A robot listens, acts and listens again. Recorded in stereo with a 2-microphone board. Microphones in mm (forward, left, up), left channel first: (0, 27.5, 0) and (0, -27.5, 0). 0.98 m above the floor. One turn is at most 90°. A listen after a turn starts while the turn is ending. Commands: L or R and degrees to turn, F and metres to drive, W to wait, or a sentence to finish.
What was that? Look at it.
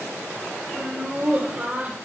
R25
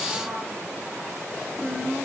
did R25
R15
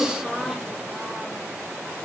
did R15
Facing the laughter.